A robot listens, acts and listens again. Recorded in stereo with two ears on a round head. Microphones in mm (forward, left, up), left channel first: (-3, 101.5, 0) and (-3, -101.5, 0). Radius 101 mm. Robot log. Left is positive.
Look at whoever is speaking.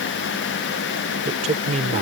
note: The man speaking: about 30° right or 150° right.
cmd yaw -30
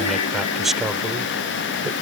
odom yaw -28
end: Found it: a man speaking, straight ahead.